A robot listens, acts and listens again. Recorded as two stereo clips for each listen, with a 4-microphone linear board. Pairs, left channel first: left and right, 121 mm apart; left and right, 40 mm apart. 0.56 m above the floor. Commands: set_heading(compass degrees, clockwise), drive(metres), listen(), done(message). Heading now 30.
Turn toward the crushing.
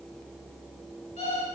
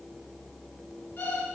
listen()
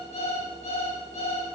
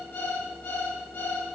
listen()
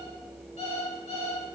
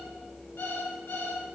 done("I can't make out crushing to turn to.")